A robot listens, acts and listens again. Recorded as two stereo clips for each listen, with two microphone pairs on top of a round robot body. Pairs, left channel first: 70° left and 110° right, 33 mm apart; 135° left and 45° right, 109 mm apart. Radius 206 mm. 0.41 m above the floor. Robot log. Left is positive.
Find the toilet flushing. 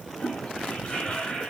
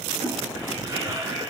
end: Found it: a toilet flushing, straight ahead, 2 to 4 m away.